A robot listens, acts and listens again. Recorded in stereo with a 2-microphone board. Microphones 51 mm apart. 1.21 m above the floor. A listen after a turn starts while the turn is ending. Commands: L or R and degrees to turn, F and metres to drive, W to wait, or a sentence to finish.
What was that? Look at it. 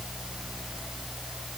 W
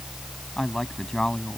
L30
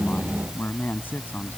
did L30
L140
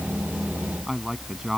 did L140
Facing the man speaking.